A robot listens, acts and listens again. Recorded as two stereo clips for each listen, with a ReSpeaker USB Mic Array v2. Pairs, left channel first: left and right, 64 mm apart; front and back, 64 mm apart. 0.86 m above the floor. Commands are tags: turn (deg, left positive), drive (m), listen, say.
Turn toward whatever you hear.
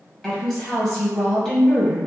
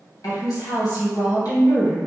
<turn deg="10"/>
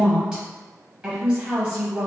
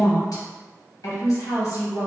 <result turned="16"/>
<say>Facing the woman speaking.</say>